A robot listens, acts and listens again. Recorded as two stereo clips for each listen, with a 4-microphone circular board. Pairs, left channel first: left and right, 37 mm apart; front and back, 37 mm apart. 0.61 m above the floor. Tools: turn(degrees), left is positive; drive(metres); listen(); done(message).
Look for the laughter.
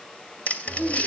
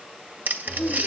turn(degrees=80)
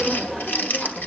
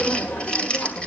turn(degrees=20)
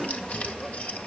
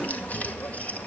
turn(degrees=15)
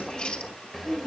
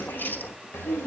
done("Found it: laughter, straight ahead, 2 to 4 m away.")